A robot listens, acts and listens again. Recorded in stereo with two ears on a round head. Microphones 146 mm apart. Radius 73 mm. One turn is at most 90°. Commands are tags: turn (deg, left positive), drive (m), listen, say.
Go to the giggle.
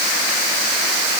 <listen/>
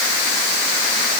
<listen/>
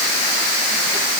<say>I can't make out a giggle to turn to.</say>